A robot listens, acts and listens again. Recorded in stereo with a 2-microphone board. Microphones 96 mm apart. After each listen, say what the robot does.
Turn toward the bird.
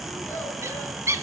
Turn 30° right.
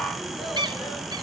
Turn 115° right.
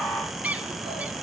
Turn 15° right.
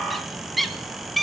Found it: a bird, straight ahead.